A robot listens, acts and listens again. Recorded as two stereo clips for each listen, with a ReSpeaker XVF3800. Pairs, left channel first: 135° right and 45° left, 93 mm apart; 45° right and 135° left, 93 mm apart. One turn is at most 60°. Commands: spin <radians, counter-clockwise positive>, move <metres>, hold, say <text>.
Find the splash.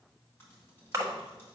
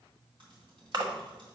spin 1.05
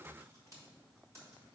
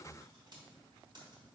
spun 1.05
spin 0.70
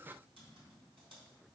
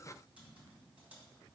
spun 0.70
say Facing where the splash came from. I can't hear it now.